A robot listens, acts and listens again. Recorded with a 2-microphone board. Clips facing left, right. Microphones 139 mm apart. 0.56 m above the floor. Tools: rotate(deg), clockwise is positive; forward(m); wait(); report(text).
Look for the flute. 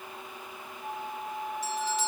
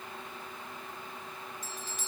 rotate(-90)
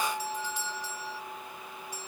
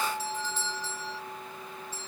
report("Found it: a flute, straight ahead.")